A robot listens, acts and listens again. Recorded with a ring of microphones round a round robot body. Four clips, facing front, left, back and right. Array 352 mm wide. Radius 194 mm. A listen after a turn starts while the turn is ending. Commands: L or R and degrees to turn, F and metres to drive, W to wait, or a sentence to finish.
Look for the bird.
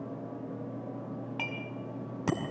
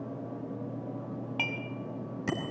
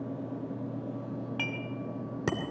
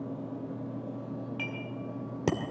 W
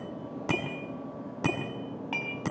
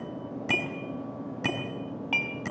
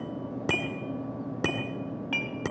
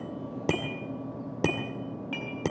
W
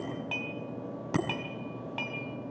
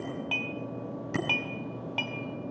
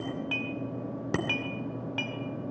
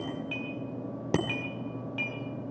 I can't make out a bird, only dishes clattering and a bicycle bell.